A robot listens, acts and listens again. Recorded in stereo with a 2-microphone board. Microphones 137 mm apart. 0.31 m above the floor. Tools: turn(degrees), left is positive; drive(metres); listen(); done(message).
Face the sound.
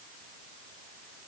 listen()
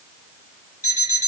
turn(degrees=70)
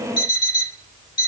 turn(degrees=35)
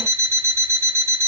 turn(degrees=-15)
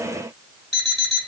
done("Found it: an alarm clock, straight ahead, 1 to 2 m away.")